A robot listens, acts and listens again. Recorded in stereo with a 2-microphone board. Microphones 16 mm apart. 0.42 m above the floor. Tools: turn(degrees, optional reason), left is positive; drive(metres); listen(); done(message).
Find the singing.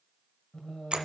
turn(degrees=50, reason="The singing: about 50° left or 130° left.")
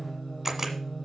turn(degrees=15, reason="So it is at 15° left.")
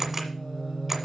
turn(degrees=10, reason="The singing is now 10° left.")
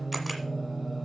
done("Found it: singing, straight ahead, 1 to 2 m away.")